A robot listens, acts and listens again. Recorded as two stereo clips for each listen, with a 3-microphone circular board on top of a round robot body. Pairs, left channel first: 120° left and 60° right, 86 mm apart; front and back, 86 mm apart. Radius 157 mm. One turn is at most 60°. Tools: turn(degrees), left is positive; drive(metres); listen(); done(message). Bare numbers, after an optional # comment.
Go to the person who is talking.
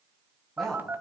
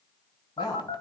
# The woman speaking: 35° left.
turn(35)
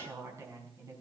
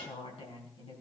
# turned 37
drive(1.0)
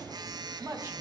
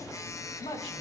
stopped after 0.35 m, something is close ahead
done("Something is in my way. I am facing the woman speaking but have not reached it.")